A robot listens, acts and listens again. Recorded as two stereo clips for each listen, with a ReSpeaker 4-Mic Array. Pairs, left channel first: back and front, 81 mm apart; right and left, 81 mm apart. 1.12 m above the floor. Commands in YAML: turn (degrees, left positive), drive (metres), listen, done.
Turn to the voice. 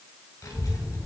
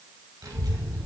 turn: 130
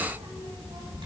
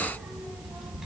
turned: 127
done: "Found it: a child speaking, straight ahead, over 4 m away."